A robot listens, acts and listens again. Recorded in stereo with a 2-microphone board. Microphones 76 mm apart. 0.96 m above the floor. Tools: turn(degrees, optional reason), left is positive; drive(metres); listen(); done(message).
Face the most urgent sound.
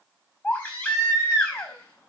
turn(degrees=30, reason="The baby crying: about 30° left or 150° left.")
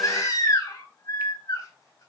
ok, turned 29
turn(degrees=120, reason="So it is at 120° left.")
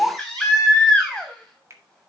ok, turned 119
done("Facing the baby crying, over 4 m away.")